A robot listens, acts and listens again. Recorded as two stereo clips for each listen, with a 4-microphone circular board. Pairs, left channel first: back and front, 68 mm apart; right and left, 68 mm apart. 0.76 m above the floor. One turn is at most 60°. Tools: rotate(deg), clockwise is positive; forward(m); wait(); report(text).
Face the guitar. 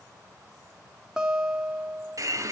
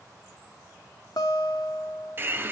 rotate(60)
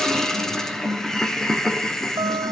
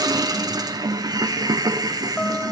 rotate(15)
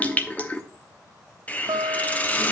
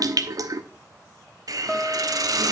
report("Found it: a guitar, straight ahead.")